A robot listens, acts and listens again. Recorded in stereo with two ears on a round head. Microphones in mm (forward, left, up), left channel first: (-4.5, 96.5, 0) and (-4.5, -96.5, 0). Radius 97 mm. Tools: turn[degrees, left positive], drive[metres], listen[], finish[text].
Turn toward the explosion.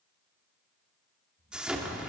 Action: turn[-30]
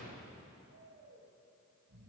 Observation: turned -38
Action: listen[]
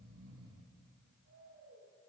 Action: finish[I heard an explosion, but can't make it out now. It was about 35° left or 140° right.]